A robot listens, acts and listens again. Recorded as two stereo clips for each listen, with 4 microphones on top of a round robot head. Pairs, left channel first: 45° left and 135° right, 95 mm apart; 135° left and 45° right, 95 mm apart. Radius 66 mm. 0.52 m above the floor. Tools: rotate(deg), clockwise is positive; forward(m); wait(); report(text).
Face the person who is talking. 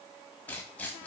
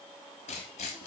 wait()
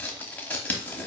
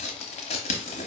wait()
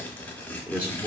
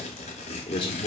rotate(-155)
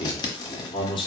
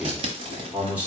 rotate(-30)
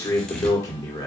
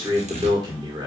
report("Found it: a man speaking, straight ahead.")